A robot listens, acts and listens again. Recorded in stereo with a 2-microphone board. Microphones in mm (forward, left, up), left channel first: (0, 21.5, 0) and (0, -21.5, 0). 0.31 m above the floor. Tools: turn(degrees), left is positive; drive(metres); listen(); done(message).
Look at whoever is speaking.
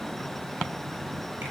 listen()
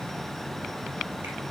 listen()
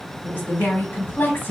turn(degrees=55)
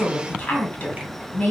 turn(degrees=50)
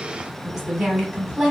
turn(degrees=-10)
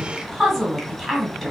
done("Facing the woman speaking.")